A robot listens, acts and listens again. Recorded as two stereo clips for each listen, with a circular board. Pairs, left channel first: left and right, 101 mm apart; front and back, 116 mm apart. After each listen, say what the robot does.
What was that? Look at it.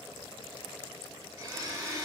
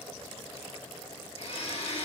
Turn 35° right.
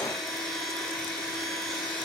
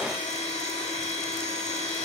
Found it: a blender, straight ahead.